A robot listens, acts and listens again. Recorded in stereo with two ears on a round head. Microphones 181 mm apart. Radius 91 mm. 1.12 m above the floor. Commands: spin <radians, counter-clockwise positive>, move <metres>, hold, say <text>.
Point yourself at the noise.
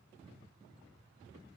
hold
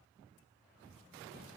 hold
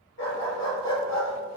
spin 1.22
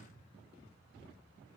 hold
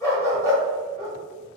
spin 0.35
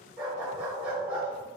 say Found it: a dog barking, straight ahead, 1 to 2 m away.